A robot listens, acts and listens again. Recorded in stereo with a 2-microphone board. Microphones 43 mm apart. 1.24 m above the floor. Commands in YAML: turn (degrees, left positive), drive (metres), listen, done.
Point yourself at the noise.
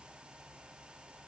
listen: true
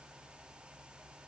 listen: true
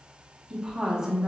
turn: -30
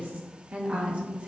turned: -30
turn: -25
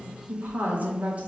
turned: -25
turn: -150
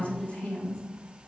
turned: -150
turn: 35
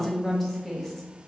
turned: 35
done: "Facing the woman speaking."